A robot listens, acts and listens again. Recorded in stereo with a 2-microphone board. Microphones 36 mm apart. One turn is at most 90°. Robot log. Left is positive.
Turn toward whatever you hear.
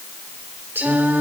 cmd yaw -90
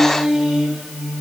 note: So it is at 15° right.
cmd yaw -15
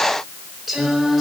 end: Found it: singing, straight ahead.